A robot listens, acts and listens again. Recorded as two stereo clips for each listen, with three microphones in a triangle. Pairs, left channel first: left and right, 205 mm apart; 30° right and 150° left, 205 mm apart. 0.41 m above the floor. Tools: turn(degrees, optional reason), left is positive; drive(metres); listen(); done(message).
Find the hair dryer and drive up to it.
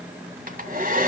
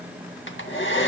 turn(degrees=-45, reason="The hair dryer: 45° right.")
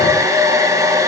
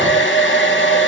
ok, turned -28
turn(degrees=-15, reason="The hair dryer is now 15° right.")
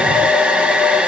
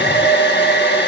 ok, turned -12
drive(metres=1.0)
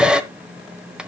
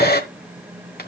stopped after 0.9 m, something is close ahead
done("I am next to the hair dryer.")